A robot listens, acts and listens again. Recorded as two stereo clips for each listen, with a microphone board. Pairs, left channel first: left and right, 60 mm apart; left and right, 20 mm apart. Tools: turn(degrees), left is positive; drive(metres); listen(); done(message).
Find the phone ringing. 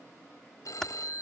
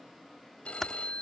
turn(degrees=90)
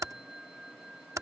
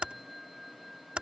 turn(degrees=-10)
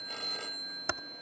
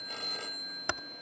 done("Facing the phone ringing.")